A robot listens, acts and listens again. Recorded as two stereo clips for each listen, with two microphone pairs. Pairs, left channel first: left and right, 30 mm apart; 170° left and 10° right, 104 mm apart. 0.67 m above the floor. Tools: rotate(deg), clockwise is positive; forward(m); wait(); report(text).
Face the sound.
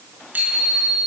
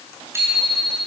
rotate(75)
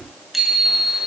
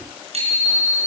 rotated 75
rotate(10)
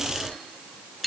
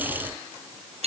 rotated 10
report("Facing the bicycle bell.")